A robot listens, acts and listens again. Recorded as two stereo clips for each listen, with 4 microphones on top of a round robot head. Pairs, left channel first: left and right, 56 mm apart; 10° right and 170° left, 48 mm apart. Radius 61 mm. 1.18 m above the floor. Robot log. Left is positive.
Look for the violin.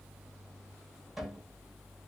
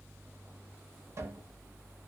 cmd idle
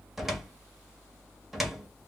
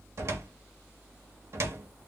cmd idle
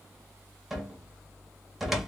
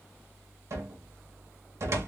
end: I can't make out a violin, only a cupboard door.